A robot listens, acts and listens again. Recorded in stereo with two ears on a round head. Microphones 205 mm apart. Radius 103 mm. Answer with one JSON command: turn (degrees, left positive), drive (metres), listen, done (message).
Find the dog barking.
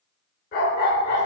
{"turn": 45}
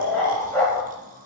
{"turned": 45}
{"turn": 10}
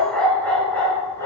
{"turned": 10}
{"turn": 10}
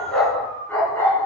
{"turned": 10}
{"turn": 15}
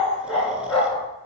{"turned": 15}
{"done": "Facing the dog barking, 2 to 4 m away."}